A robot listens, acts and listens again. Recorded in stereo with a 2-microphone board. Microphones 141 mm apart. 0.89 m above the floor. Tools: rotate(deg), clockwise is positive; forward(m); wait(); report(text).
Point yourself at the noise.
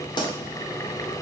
rotate(-30)
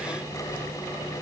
wait()
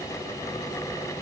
report("I heard a pop, but can't make it out now. It was about straight ahead or 120° left.")